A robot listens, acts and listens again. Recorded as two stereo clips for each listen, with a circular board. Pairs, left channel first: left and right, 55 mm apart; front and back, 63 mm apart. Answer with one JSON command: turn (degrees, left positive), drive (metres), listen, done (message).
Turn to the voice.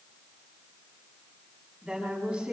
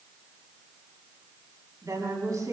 {"turn": -165}
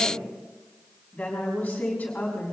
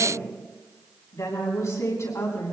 {"turn": 25}
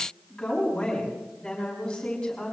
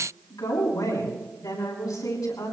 {"turn": 15}
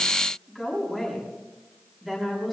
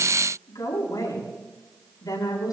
{"done": "Found it: a woman speaking, straight ahead, over 4 m away."}